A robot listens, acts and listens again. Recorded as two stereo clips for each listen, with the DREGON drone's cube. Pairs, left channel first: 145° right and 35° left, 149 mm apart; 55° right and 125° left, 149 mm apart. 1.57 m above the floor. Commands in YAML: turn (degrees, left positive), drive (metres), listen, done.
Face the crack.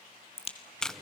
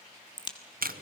turn: -110
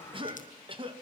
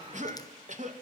done: "Facing where the crack came from. I can't hear it now."